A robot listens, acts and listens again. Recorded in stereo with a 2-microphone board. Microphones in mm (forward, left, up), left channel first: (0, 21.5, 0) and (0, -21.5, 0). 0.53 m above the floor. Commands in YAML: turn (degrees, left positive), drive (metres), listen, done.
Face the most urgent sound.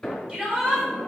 turn: -25
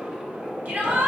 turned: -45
turn: -105
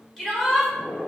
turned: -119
turn: 15
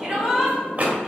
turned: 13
done: "Facing the shout, 1 to 2 m away."